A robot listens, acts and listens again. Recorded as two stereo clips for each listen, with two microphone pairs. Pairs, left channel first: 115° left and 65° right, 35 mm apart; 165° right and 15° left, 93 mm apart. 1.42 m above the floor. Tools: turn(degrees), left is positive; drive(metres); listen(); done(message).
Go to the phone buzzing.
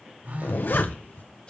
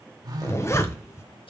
turn(degrees=-35)
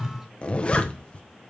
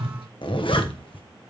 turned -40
drive(metres=1.0)
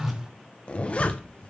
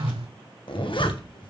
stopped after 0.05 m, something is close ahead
done("Something is in my way. I am facing the phone buzzing but have not reached it.")